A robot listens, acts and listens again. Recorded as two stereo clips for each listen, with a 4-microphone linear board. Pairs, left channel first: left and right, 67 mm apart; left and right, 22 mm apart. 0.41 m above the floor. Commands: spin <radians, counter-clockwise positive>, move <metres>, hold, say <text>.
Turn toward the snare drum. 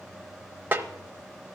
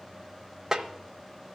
spin -0.52
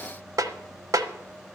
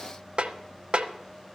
spin -2.01
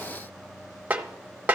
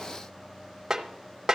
spin -0.44
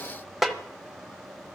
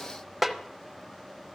say Facing the snare drum.